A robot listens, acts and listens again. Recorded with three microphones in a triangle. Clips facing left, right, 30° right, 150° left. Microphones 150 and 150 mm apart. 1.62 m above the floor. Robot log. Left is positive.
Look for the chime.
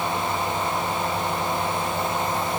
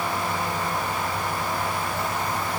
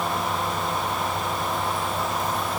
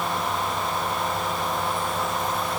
cmd idle
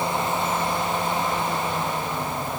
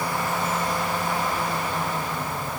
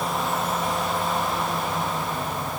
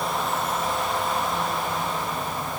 cmd idle
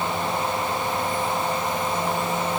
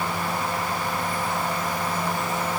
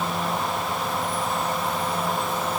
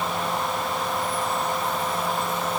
end: I can't make out a chime.